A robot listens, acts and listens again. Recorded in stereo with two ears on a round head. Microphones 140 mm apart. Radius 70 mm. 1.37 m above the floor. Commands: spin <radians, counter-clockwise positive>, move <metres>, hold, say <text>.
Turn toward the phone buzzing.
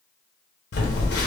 spin 1.31
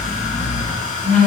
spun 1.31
say Found it: a phone buzzing, straight ahead, 1 to 2 m away.